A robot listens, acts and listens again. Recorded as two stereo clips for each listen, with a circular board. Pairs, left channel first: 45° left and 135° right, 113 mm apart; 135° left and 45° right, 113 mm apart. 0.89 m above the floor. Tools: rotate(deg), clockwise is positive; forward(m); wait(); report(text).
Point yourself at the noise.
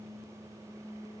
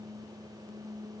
wait()
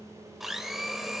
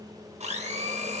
rotate(45)
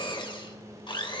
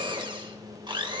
report("Facing the blender, 2 to 4 m away.")